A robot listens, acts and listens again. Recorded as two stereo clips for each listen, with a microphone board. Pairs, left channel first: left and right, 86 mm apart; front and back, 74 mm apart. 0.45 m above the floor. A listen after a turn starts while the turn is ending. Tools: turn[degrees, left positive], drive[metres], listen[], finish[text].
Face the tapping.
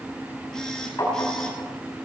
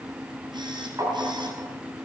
Thought: The tapping: 140° left.
Action: turn[140]
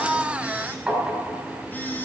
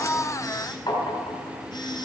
Thought: The tapping is now 10° right.
Action: turn[-10]
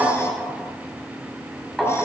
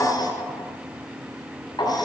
Action: finish[Found it: tapping, straight ahead, over 4 m away.]